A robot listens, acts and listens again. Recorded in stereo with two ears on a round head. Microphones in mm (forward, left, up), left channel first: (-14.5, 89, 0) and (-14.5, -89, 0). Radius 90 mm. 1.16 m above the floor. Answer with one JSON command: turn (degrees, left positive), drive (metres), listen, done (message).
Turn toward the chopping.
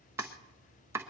{"turn": -30}
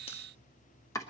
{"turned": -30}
{"turn": 15}
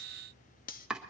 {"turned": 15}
{"done": "Facing the chopping."}